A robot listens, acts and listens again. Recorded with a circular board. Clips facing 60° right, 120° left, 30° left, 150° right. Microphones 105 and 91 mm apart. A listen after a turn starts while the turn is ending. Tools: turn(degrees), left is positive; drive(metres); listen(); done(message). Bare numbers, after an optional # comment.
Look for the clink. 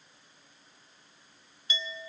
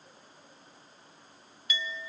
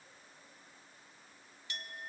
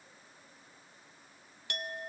# The clink: 120° right.
turn(-120)
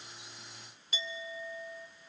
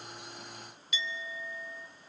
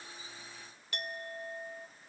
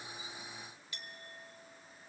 done("Facing the clink, 1 to 2 m away.")